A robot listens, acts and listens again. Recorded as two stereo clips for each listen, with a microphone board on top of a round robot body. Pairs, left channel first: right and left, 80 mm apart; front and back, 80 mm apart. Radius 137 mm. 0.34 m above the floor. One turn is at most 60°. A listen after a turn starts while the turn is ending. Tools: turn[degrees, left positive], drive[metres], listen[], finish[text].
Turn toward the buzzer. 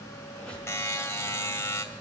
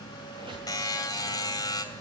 Thought: The buzzer: 40° right.
Action: turn[-40]
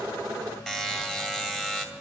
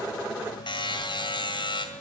Action: finish[Found it: a buzzer, straight ahead.]